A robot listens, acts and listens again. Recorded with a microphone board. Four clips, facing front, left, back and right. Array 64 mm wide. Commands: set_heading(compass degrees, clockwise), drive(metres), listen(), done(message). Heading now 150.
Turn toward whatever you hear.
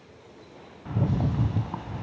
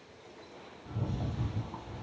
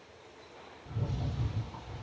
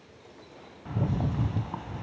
set_heading(185)
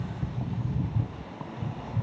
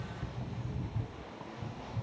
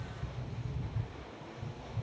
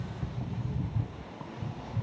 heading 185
set_heading(195)
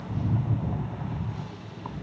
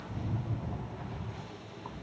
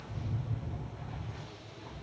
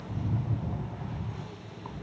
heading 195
done("Facing the rattle.")